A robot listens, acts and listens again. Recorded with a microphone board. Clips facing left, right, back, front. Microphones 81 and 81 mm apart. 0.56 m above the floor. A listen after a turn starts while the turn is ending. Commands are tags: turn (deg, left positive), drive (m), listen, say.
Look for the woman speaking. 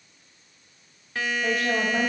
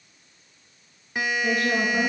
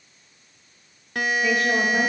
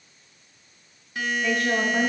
<turn deg="90"/>
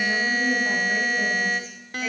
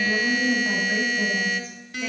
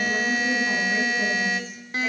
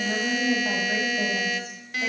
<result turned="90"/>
<say>Found it: a woman speaking, straight ahead, 2 to 4 m away.</say>